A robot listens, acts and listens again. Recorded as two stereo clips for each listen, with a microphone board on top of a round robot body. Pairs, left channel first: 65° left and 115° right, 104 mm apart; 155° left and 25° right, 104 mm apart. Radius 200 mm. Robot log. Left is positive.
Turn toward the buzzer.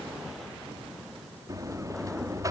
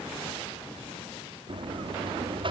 note: The buzzer: 55° right.
cmd yaw -55
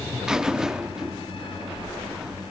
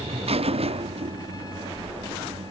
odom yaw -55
note: The buzzer is now 30° right.
cmd yaw -30
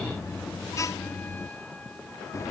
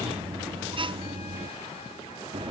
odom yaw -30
note: The buzzer is now 10° left.
cmd yaw +10
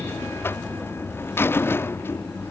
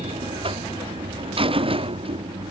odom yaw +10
end: Facing the buzzer.